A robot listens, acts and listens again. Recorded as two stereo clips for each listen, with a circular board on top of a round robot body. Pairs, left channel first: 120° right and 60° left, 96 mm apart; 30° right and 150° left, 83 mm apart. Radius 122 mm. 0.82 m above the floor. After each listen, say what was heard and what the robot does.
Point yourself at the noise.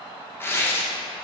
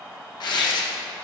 The tearing paper: 55° right. Turn 55° right.
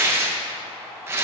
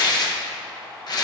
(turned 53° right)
Facing the tearing paper.